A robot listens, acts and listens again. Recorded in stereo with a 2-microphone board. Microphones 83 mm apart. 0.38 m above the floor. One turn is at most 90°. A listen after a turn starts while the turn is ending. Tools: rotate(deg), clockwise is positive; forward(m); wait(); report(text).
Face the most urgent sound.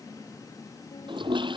wait()
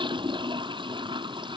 wait()
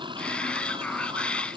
rotate(-30)
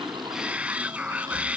rotate(15)
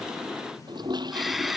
report("Facing the shout.")